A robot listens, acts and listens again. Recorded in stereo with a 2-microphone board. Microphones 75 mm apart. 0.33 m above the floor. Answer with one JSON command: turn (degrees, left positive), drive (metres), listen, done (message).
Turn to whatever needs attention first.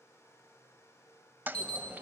{"turn": -90}
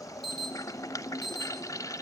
{"done": "Facing the alarm."}